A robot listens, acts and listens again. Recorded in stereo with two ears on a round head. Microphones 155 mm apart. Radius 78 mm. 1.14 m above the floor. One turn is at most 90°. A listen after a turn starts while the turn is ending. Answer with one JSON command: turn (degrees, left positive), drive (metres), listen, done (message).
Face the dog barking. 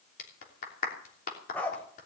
{"turn": 30}
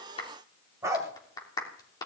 {"turn": -20}
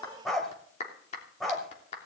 {"done": "Facing the dog barking, 2 to 4 m away."}